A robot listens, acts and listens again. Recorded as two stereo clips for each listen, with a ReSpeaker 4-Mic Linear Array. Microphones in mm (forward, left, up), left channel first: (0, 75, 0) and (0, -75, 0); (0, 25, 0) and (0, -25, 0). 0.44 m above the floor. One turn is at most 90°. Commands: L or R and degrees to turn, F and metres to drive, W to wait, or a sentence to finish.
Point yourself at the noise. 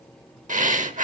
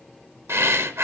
R60
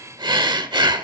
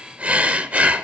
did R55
R35
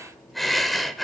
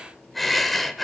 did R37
Found it: breathing, straight ahead.